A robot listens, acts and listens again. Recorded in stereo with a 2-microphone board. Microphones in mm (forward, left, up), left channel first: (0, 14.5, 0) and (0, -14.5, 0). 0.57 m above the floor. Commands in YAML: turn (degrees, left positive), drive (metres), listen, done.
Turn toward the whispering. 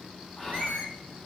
turn: 25
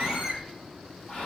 turn: 130
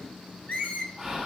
turn: -25
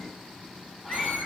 listen: true
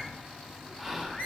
turn: 10
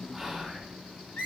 done: "Facing the whispering, 1 to 2 m away."